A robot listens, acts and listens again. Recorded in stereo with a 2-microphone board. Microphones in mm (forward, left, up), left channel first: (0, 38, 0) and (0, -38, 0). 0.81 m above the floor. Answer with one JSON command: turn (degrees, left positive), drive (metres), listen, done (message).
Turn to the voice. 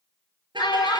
{"turn": 75}
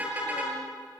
{"listen": true}
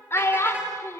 {"turn": 35}
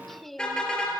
{"listen": true}
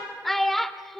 {"done": "Found it: a child speaking, straight ahead, 1 to 2 m away."}